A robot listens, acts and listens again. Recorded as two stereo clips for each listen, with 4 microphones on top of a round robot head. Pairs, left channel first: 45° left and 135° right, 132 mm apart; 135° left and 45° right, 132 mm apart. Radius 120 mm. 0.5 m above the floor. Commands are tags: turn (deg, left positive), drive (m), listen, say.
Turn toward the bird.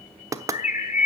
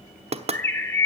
<turn deg="60"/>
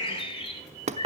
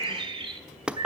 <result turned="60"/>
<say>Facing the bird.</say>